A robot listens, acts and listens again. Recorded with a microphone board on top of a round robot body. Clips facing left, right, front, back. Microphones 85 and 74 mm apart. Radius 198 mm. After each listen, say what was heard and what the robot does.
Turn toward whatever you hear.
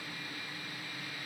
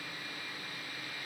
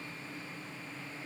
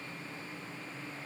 Keep listening.
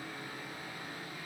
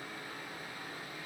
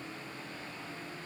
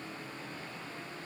Keep listening.
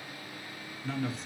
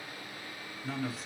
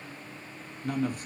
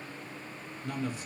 Facing the man speaking.